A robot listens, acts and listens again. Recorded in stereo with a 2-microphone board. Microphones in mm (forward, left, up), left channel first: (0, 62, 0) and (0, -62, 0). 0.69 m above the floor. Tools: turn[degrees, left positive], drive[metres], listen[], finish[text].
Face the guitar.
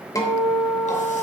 Thought: The guitar: about 25° left or 155° left.
Action: turn[25]
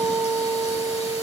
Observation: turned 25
Action: finish[Facing the guitar, 2 to 4 m away.]